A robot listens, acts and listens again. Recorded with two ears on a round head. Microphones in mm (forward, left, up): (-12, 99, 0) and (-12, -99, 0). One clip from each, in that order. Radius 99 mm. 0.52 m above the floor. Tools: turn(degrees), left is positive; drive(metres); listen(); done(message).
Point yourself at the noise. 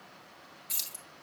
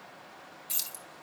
turn(degrees=-30)
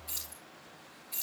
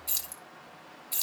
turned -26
turn(degrees=-125)
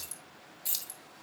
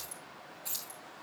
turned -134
turn(degrees=25)
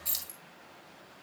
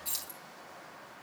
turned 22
turn(degrees=10)
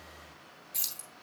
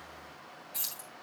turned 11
turn(degrees=10)
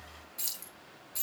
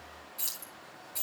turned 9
done("Found it: keys jangling, straight ahead, 2 to 4 m away.")